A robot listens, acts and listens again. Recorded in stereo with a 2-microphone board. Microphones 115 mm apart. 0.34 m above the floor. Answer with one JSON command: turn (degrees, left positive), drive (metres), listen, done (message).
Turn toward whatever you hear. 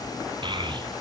{"turn": -45}
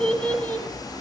{"turn": 15}
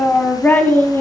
{"turn": 20}
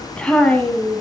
{"turn": 15}
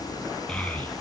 {"turn": 10}
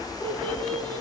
{"turn": 10}
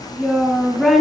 {"done": "Facing the child speaking."}